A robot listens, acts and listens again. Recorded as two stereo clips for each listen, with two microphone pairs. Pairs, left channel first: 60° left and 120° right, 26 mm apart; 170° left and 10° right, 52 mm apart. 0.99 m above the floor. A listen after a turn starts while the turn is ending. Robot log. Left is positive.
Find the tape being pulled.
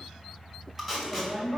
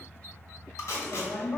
note: The tape being pulled: 170° left.
cmd yaw +170
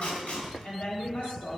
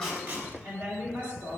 cmd idle
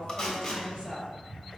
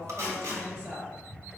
end: Found it: tape being pulled, straight ahead, 1 to 2 m away.